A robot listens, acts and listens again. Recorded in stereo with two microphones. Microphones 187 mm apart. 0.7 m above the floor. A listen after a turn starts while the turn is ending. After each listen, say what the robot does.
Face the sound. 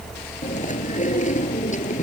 Turn 40° left.
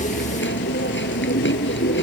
Turn 100° left.
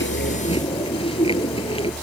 Turn 30° left.
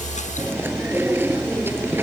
Turn 10° right.
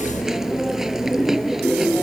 Found it: chewing, straight ahead.